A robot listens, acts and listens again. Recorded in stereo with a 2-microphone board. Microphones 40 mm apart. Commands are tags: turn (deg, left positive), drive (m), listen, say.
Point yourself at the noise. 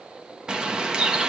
<turn deg="-20"/>
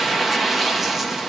<say>Found it: a bird, straight ahead.</say>